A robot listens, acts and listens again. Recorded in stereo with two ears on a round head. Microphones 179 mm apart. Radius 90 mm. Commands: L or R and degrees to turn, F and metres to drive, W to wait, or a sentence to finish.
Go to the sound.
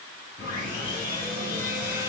L45
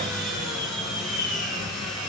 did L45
F1.0
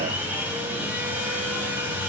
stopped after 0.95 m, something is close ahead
R10
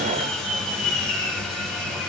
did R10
I am next to the sawing.